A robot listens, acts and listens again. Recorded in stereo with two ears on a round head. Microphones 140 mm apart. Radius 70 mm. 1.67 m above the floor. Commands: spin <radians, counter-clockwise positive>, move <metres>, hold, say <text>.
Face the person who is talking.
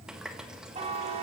hold
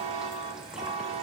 hold
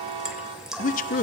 spin 0.96
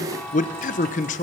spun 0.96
spin 1.05
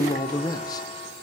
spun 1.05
spin 0.52
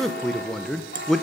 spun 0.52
say Found it: a man speaking, straight ahead.